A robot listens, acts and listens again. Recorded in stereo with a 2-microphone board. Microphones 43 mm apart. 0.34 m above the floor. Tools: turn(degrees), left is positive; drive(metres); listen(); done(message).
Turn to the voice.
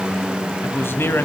turn(degrees=65)
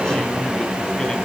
listen()
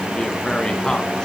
listen()
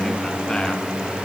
done("I heard a man speaking, but can't make it out now. It was about straight ahead or 50° left.")